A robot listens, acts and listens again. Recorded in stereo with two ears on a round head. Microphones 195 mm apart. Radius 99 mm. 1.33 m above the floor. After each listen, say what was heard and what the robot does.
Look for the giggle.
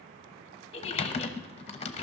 The giggle: about 25° left or 155° left. Turn 25° left.
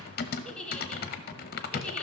Facing the giggle, under 1 m away.